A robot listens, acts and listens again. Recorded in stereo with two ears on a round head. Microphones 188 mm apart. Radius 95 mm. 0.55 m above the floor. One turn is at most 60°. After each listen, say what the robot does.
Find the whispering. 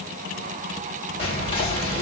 Turn 25° left.
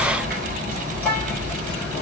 Turn 10° left.
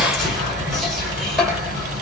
Facing the whispering, 1 to 2 m away.